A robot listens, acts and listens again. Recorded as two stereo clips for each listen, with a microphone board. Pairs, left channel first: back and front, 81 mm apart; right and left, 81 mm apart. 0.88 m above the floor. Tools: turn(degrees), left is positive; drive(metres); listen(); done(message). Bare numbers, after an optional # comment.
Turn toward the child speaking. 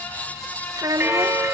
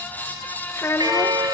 # The child speaking: 35° right.
turn(-35)
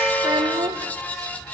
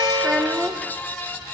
done("Found it: a child speaking, straight ahead, under 1 m away.")